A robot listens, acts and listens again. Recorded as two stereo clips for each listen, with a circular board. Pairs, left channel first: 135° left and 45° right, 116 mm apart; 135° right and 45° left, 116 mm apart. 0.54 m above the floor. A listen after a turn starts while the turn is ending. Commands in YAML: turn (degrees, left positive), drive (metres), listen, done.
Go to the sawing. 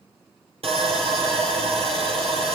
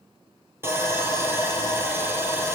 turn: -20
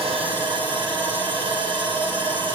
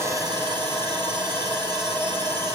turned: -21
drive: 1.0
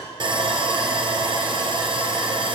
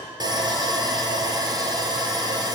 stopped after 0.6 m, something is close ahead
done: "Something is in my way. I am facing the sawing but have not reached it."